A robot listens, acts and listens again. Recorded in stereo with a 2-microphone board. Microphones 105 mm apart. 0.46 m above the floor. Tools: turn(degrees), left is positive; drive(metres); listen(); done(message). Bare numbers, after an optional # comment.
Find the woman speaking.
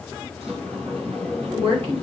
# The woman speaking: about 65° right or 115° right.
turn(-65)
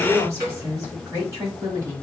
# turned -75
# So it is at 35° right.
turn(-35)
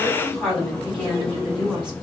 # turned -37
# The woman speaking is now 10° right.
turn(-10)
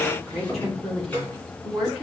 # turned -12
done("Facing the woman speaking, over 4 m away.")